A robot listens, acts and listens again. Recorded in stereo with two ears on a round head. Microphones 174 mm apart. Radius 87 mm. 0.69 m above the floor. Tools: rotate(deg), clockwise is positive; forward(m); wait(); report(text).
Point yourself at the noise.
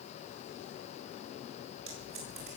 rotate(75)
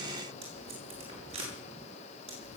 rotate(30)
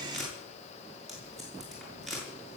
report("Facing the tape being pulled, over 4 m away.")